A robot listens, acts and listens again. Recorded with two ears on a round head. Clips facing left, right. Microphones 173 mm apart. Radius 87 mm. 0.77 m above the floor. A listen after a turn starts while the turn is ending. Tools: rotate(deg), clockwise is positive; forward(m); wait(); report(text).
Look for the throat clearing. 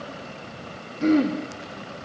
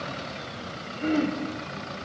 rotate(-50)
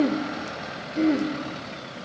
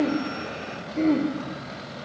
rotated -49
report("Facing the throat clearing.")